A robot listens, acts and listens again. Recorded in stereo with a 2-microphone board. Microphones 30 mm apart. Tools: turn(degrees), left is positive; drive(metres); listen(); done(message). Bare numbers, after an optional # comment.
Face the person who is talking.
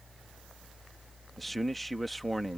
turn(30)
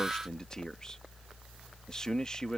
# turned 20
# So it is at 155° left.
turn(155)
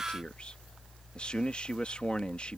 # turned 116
# The man speaking is now 40° left.
turn(40)
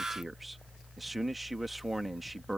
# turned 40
done("Found it: a man speaking, straight ahead.")